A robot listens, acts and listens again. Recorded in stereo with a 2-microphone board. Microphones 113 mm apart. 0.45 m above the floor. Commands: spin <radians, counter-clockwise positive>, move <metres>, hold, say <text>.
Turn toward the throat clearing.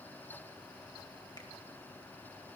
hold
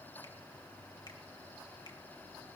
hold
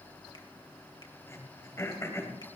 spin 0.52
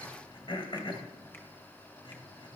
spin 2.09
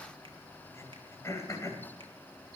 spin 0.61
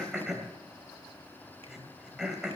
say Facing the throat clearing, 2 to 4 m away.